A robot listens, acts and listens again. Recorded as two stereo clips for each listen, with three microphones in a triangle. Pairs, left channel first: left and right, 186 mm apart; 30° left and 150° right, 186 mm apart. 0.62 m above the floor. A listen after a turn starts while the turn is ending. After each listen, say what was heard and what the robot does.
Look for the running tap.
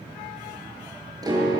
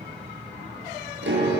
Keep listening.
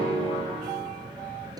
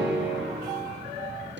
Keep listening.
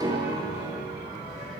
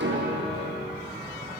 I can't make out a running tap, only a piano.